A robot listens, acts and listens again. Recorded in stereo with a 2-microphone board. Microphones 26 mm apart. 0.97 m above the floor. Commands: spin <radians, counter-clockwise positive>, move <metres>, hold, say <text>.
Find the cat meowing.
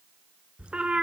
spin -0.70
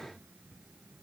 hold
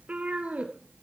spin -2.09
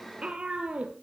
spin -0.79
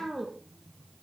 spin -0.17
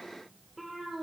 say Facing the cat meowing, over 4 m away.